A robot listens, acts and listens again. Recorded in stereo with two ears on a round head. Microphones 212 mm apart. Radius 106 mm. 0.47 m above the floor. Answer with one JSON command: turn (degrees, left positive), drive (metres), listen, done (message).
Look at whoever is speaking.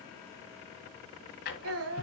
{"turn": -65}
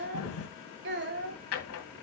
{"turn": -50}
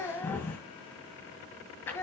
{"turn": 10}
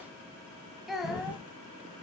{"done": "Facing the child speaking."}